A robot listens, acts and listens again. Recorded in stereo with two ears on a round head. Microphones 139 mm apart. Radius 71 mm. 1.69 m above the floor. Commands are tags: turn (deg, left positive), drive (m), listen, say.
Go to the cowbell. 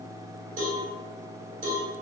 <turn deg="-50"/>
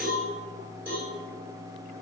<turn deg="-15"/>
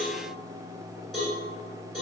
<drive m="1.0"/>
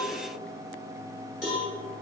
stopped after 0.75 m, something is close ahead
<say>Arrived at the cowbell, straight ahead.</say>